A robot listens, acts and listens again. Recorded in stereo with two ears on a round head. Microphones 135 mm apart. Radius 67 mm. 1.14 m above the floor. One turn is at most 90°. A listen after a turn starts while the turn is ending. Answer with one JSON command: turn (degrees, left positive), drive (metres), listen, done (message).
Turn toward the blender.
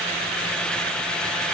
{"listen": true}
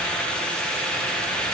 {"listen": true}
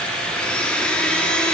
{"turn": 30}
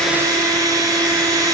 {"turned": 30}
{"turn": -25}
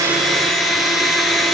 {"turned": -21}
{"done": "Found it: a blender, straight ahead, 1 to 2 m away."}